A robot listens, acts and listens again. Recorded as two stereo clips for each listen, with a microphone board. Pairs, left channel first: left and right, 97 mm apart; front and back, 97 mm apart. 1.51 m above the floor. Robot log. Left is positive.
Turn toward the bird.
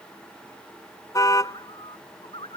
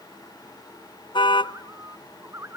note: The bird: 115° left.
cmd yaw +115
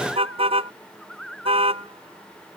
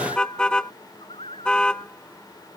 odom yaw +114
end: Facing the bird.